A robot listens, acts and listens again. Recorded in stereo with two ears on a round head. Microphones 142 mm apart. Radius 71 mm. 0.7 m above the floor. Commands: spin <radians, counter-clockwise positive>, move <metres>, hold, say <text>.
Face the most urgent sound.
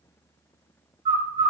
hold
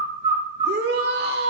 spin -1.22
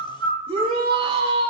spin -0.61
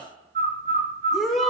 say Facing the shout, 1 to 2 m away.